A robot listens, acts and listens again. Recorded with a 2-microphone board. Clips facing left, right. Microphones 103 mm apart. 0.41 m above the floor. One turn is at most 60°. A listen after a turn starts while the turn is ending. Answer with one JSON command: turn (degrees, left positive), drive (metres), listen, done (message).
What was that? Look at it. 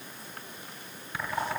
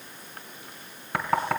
{"turn": -60}
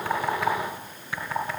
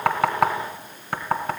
{"turn": -60}
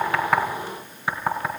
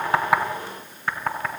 {"turn": 10}
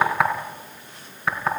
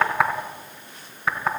{"done": "Facing the knocking, 2 to 4 m away."}